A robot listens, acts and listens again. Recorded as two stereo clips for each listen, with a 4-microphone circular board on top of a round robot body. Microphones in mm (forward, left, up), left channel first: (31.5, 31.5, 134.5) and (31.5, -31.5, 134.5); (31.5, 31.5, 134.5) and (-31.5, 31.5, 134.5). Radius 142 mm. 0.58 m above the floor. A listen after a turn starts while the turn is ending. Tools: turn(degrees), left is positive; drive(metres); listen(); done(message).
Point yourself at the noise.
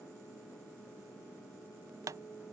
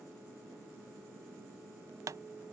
turn(degrees=-135)
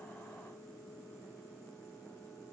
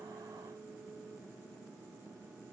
done("I heard a pop from this way, but can't make it out now.")